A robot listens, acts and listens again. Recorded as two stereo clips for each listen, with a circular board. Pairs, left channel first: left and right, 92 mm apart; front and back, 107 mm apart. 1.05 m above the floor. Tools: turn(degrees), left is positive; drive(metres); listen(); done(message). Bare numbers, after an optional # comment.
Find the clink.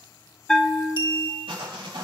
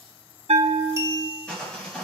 # The clink: 120° left.
turn(120)
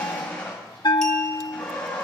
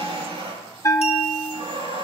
listen()
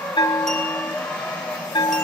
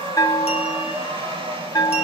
listen()
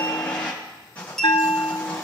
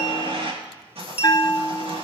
done("Facing the clink, 1 to 2 m away.")